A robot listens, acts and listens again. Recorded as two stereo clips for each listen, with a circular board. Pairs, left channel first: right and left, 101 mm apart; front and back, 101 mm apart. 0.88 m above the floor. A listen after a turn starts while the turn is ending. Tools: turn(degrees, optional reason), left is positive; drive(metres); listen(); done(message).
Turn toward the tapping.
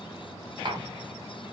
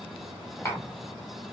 turn(degrees=60, reason="The tapping: 60° left.")
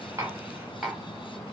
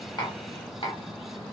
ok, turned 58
done("Facing the tapping.")